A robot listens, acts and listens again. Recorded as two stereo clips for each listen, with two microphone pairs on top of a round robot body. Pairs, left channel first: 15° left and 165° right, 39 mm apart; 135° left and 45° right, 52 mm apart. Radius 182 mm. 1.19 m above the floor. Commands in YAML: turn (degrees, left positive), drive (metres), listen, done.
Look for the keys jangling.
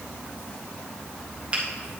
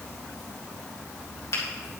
listen: true
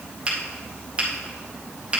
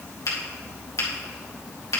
listen: true
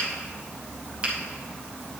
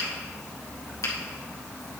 done: "I can't make out keys jangling to turn to."